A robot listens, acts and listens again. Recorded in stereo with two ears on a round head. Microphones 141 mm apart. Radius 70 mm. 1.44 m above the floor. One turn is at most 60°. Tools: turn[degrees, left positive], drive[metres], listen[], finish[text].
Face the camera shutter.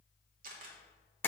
Thought: The camera shutter: about 55° right or 125° right.
Action: turn[-55]
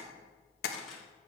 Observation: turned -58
Action: finish[Found it: a camera shutter, straight ahead, 1 to 2 m away.]